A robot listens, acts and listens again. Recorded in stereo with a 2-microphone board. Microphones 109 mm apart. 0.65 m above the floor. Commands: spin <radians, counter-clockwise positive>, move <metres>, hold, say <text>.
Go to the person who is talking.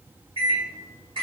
hold
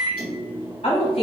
spin 1.13
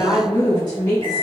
spin 0.61
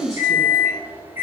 move 1.0
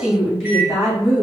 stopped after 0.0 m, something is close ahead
say Something is in my way. I am facing the woman speaking but have not reached it.